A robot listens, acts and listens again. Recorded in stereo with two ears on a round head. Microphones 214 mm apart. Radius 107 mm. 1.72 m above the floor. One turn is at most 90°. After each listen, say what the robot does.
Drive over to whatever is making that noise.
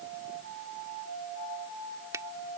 Turn 30° right.
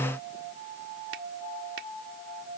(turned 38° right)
Keep listening.
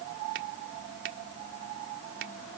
Turn 90° right.
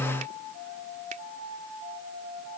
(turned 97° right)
Turn 30° right.
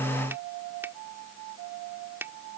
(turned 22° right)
Turn 10° right.
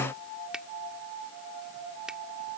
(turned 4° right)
Drive 1.0 m forward.
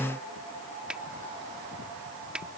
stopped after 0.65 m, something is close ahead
Blocked. The finger snap is further on, straight ahead.